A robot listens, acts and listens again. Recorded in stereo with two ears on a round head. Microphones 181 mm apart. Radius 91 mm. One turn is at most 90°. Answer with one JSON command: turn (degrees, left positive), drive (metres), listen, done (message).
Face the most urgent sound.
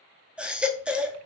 {"turn": -30}
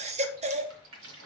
{"turn": -90}
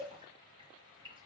{"turn": -55}
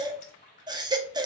{"turn": -20}
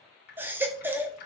{"turn": -10}
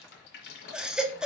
{"done": "Facing the baby crying, under 1 m away."}